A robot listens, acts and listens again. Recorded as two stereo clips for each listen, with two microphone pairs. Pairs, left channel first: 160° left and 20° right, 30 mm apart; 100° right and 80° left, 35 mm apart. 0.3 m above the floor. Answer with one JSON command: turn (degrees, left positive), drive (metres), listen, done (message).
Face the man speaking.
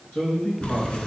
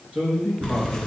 {"turn": 130}
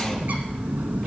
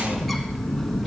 {"listen": true}
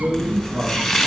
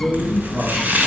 {"done": "Found it: a man speaking, straight ahead."}